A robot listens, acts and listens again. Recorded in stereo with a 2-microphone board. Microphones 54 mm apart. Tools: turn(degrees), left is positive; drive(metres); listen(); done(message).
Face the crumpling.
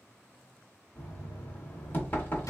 listen()
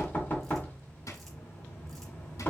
listen()
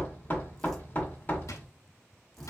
done("I can't make out crumpling to turn to.")